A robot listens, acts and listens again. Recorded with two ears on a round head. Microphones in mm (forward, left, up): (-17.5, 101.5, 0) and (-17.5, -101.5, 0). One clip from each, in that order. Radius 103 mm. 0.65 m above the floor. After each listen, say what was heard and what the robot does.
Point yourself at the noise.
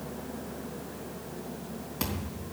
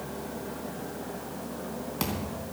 Turn 30° right.
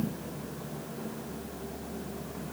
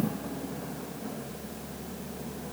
Keep listening.
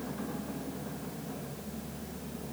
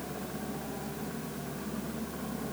I heard a thud, but can't make it out now. It was about 25° left or 145° right.